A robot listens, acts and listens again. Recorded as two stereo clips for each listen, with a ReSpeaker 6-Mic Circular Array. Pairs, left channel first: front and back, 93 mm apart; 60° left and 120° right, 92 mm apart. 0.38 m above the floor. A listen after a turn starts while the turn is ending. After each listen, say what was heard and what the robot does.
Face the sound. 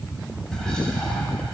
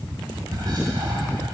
The whispering: 85° right. Turn 85° right.
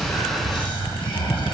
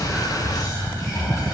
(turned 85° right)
The whispering is now 15° left. Turn 15° left.
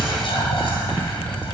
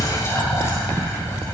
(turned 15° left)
Facing the whispering.